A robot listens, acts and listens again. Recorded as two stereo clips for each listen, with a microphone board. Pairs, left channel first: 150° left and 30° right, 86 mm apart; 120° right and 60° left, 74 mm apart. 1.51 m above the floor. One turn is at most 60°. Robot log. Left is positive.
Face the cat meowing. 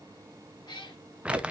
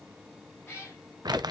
note: The cat meowing: straight behind.
cmd yaw +60
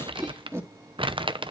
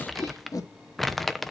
note: Nothing new. It was at 120° left.
cmd yaw +60
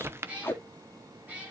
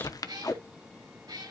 note: The cat meowing is now 45° left.
cmd yaw +45
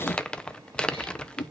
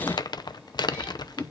cmd idle
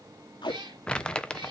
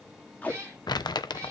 end: Facing the cat meowing.